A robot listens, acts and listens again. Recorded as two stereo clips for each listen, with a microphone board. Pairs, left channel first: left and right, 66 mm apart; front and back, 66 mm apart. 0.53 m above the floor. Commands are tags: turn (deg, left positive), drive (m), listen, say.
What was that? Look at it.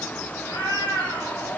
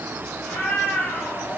<turn deg="80"/>
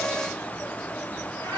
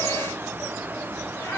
<turn deg="35"/>
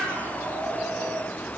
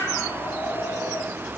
<say>Found it: a cat meowing, straight ahead, over 4 m away.</say>